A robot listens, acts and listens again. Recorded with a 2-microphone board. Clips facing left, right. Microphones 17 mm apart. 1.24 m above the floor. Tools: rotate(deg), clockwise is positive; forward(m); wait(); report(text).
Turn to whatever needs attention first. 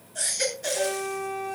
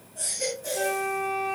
rotate(-70)
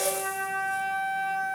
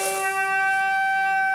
wait()
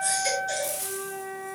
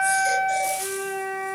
wait()
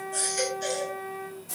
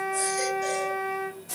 report("I heard a baby crying, but can't make it out now. It was about straight ahead or 40° left.")